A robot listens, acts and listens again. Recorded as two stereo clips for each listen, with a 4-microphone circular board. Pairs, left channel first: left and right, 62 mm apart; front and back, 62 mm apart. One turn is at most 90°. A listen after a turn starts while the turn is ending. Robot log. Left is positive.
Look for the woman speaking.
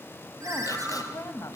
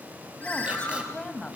note: The woman speaking: 70° left.
cmd yaw +70
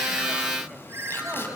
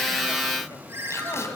cmd idle
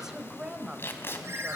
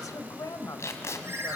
note: The woman speaking is now 15° right.
cmd yaw -15
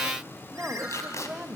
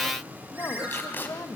note: The woman speaking is now 20° right.
cmd yaw -20
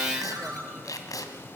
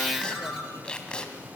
cmd idle
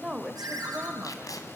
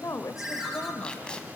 note: The woman speaking is now 10° right.
cmd yaw -10
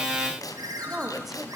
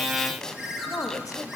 end: Found it: a woman speaking, straight ahead.